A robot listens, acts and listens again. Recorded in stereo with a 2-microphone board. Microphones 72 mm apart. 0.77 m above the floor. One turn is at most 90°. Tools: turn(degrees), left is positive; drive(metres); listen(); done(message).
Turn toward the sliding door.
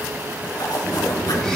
turn(degrees=-25)
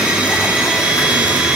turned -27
listen()
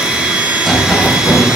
done("Facing the sliding door, 2 to 4 m away.")